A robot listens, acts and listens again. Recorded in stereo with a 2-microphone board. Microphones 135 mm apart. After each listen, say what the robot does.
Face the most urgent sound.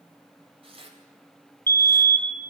Turn 15° left.
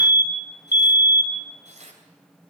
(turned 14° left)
Turn 150° left.
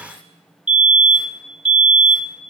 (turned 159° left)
Turn 15° right.
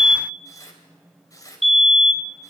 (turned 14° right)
Found it: a fire alarm, straight ahead, 1 to 2 m away.